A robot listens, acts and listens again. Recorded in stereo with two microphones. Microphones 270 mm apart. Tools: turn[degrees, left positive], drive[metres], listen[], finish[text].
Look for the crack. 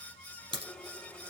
Thought: The crack: about 35° right or 145° right.
Action: turn[-35]
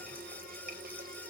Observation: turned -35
Action: listen[]
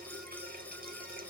Action: finish[I heard a crack, but can't make it out now. It was about straight ahead or 110° right.]